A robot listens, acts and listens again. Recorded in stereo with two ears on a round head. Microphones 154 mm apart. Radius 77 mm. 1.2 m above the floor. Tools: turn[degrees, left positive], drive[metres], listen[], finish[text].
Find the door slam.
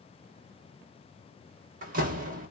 Thought: The door slam: about 50° right or 130° right.
Action: turn[-50]
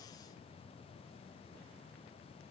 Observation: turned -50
Action: listen[]
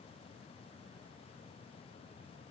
Action: finish[I heard a door slam, but can't make it out now. It was about straight ahead or 80° right.]